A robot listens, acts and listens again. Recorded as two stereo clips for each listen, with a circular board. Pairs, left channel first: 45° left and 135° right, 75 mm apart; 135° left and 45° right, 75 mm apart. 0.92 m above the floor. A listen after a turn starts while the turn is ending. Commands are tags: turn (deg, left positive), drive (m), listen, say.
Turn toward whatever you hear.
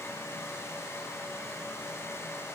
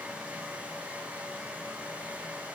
<listen/>
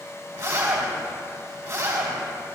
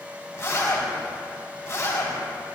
<turn deg="-175"/>
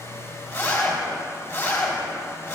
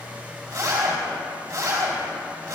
<say>Found it: a zipper, straight ahead, 2 to 4 m away.</say>